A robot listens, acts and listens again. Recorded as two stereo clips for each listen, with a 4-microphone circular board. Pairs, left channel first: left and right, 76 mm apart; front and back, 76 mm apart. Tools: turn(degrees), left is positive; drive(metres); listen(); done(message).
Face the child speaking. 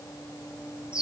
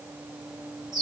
listen()
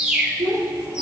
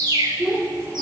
turn(degrees=-110)
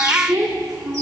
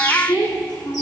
done("Facing the child speaking.")